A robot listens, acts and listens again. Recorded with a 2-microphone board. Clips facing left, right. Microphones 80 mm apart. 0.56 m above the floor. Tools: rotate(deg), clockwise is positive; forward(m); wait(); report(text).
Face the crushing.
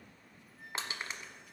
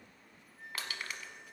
rotate(-25)
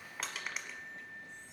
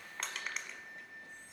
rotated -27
report("Found it: crushing, straight ahead.")